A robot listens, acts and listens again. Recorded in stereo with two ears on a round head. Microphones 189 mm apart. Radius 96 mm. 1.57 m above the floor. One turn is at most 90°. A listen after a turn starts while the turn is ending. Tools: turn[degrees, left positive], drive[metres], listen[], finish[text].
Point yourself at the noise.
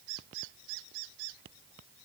Action: listen[]
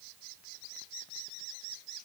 Action: listen[]
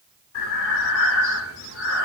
Thought: The breathing: about 75° left or 105° left.
Action: turn[75]
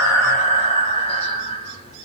Thought: So it is at 30° left.
Action: turn[30]
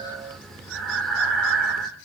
Action: finish[Facing the breathing, 2 to 4 m away.]